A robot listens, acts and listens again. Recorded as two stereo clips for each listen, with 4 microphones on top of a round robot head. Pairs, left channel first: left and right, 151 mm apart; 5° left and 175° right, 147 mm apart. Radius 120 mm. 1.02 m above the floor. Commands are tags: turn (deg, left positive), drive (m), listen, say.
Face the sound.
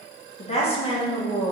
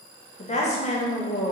<turn deg="35"/>
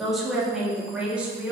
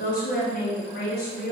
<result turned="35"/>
<turn deg="-10"/>
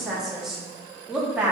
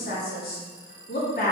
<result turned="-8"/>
<turn deg="-10"/>
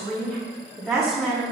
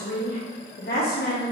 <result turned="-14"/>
<say>Found it: a woman speaking, straight ahead.</say>